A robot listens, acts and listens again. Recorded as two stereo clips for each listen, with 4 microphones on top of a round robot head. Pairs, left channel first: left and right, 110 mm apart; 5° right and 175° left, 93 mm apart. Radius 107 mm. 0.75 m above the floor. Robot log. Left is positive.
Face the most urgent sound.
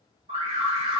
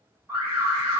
note: The alarm: 110° right.
cmd yaw -110
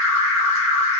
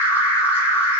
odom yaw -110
end: Found it: an alarm, straight ahead.